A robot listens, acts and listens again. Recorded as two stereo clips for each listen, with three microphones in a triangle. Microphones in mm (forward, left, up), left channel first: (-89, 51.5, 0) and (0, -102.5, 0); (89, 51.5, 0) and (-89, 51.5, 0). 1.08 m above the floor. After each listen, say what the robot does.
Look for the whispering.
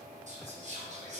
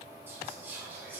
Turn 105° right.
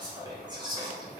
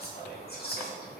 Found it: whispering, straight ahead.